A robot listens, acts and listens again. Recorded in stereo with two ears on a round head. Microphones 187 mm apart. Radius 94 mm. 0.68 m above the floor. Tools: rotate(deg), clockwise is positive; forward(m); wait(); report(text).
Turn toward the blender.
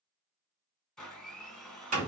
rotate(-30)
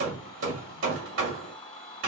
rotate(-150)
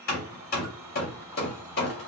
rotate(20)
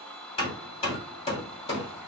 report("Found it: a blender, straight ahead.")